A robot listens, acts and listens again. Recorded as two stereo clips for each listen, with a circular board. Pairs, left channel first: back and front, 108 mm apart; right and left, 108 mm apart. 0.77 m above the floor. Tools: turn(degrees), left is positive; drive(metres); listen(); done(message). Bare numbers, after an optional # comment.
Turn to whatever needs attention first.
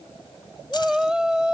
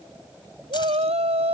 # The shout: 85° left.
turn(85)
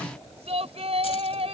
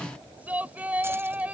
# The shout is now 15° left.
turn(15)
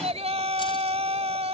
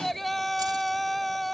done("Facing the shout.")